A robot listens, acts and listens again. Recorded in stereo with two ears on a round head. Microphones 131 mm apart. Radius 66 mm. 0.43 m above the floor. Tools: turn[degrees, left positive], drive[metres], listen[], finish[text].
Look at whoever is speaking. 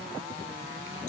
Action: listen[]
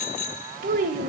Thought: The child speaking: about 60° right or 120° right.
Action: turn[-60]
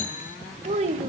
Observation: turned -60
Thought: So it is at 50° right.
Action: turn[-50]
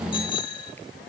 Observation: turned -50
Action: listen[]
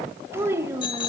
Thought: The child speaking is now 20° right.
Action: turn[-20]
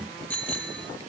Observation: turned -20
Action: listen[]
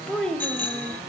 Action: finish[Facing the child speaking.]